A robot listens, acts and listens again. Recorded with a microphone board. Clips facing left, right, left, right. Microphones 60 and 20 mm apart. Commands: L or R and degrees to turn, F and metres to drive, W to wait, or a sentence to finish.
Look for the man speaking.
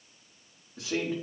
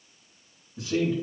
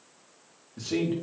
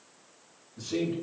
L70
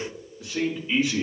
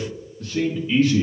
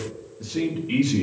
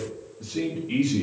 L20
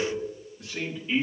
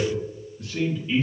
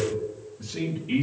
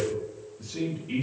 L15
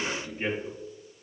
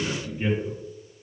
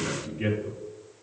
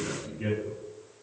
L15
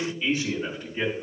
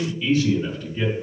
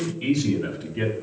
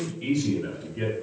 L20
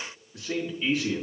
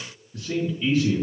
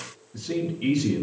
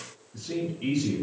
Facing the man speaking.